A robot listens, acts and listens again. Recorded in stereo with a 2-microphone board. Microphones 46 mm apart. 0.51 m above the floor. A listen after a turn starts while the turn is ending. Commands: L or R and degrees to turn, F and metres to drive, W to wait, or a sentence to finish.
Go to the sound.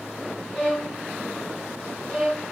L30
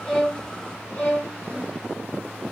L135
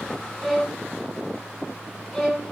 F1.0
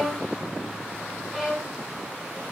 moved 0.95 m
R10
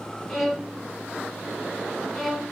F1.0
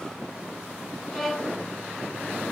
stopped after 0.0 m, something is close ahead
Arrived at the violin, straight ahead.